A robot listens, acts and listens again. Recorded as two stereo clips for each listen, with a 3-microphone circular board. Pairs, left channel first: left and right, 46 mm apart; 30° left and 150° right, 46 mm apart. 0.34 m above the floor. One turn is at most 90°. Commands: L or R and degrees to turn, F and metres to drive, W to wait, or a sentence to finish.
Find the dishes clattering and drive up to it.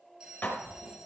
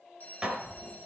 L90
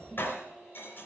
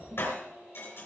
L55
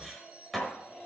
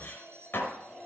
F1.0
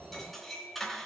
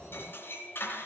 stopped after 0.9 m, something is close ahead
Blocked. The dishes clattering is further on, straight ahead.